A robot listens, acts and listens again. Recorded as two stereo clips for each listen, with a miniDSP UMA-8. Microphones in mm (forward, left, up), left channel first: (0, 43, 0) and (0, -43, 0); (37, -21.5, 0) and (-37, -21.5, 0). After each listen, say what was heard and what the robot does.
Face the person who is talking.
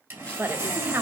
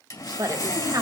The woman speaking: 150° right. Turn 150° right.
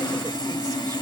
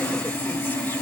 Keep listening.
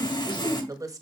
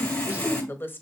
The woman speaking is now 55° right. Turn 55° right.
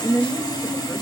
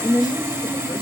Facing the woman speaking, 1 to 2 m away.